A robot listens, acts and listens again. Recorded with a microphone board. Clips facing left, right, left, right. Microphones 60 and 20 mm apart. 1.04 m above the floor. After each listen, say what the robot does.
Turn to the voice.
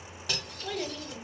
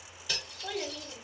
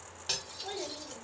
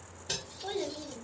Turn 30° right.
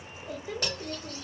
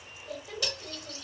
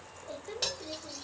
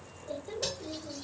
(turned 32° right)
Turn 25° left.
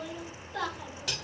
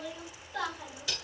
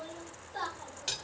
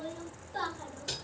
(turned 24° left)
Facing the child speaking.